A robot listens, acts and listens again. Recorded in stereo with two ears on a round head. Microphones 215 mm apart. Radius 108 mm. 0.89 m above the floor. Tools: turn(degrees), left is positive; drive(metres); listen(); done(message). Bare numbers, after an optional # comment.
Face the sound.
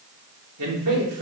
# The man speaking: about 75° right or 105° right.
turn(-75)
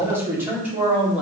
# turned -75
done("Facing the man speaking.")